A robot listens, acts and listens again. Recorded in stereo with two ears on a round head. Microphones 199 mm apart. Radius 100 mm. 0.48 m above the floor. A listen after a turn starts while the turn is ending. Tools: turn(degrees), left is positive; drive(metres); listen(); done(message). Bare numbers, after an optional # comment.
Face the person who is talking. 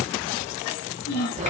# The child speaking: about 50° left or 130° left.
turn(50)
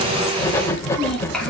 listen()
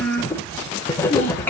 # So it is at 10° left.
turn(10)
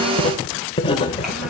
listen()
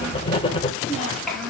done("Found it: a child speaking, straight ahead.")